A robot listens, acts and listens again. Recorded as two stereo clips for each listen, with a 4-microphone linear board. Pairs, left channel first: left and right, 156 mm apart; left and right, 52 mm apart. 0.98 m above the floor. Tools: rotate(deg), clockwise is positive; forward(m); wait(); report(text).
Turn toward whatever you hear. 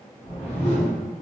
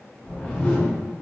rotate(-40)
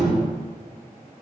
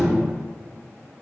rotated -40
report("Found it: a whoosh, straight ahead, 1 to 2 m away.")